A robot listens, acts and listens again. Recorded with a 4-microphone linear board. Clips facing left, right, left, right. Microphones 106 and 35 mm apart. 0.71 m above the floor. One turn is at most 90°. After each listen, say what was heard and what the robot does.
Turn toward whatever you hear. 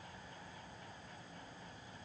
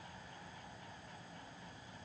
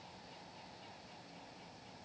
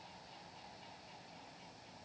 Keep listening.
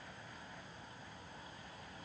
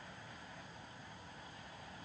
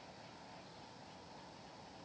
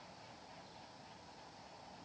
Keep listening.
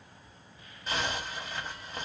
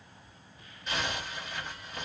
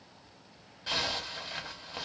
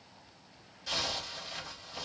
The zipper: about 35° left or 145° left. Turn 35° left.
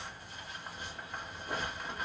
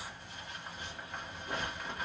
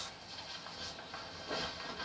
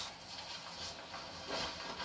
Facing the zipper.